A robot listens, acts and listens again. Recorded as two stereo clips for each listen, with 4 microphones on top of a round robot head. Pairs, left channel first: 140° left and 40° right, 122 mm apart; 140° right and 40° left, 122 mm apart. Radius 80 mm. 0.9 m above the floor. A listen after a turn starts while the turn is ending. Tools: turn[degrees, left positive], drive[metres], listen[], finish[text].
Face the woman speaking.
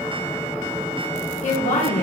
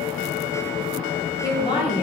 Thought: The woman speaking: 165° left.
Action: turn[165]
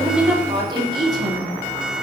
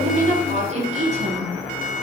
Thought: The woman speaking is now 20° left.
Action: turn[20]
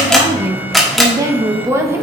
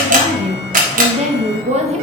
Thought: The woman speaking is now 30° left.
Action: turn[30]
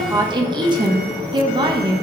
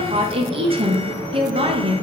Action: finish[Found it: a woman speaking, straight ahead.]